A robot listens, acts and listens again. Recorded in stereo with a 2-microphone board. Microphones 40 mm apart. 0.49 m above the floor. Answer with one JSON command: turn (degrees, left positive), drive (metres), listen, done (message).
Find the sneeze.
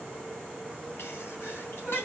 {"turn": 70}
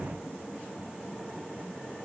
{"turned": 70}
{"listen": true}
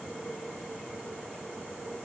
{"done": "I heard a sneeze, but can't make it out now. It was about straight ahead or 40° left."}